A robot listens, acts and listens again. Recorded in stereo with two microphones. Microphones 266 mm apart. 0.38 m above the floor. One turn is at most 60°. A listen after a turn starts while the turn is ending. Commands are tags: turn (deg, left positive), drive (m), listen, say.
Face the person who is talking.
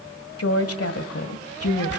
<turn deg="60"/>
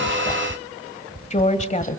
<turn deg="30"/>
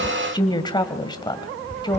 <turn deg="20"/>
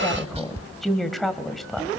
<say>Facing the woman speaking, 1 to 2 m away.</say>